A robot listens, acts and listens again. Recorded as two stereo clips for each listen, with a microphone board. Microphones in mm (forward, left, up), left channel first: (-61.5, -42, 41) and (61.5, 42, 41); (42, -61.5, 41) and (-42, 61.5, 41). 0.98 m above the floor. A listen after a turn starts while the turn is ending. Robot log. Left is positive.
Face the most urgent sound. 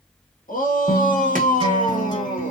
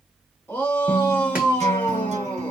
note: The shout: 135° right.
cmd yaw -135
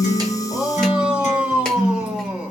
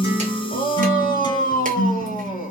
note: The shout is now 50° right.
cmd yaw -50
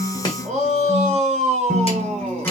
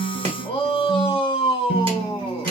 end: Facing the shout, 1 to 2 m away.